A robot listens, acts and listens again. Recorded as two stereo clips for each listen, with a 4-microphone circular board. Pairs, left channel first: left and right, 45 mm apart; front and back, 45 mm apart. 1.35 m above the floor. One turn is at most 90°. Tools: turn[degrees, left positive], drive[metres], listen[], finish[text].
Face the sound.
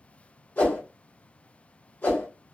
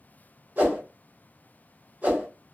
Thought: The whoosh: 135° left.
Action: turn[90]
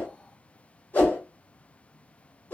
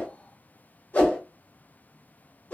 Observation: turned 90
Thought: The whoosh is now 45° left.
Action: turn[45]
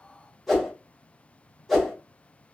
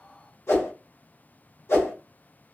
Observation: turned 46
Action: finish[Found it: a whoosh, straight ahead.]